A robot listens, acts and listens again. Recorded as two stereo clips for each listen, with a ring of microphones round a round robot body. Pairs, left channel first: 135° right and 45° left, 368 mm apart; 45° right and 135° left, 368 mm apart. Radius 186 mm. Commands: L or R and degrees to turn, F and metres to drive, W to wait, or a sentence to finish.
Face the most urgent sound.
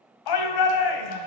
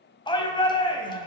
R120
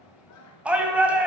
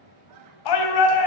R40
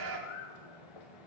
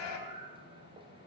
Facing the shout, 1 to 2 m away.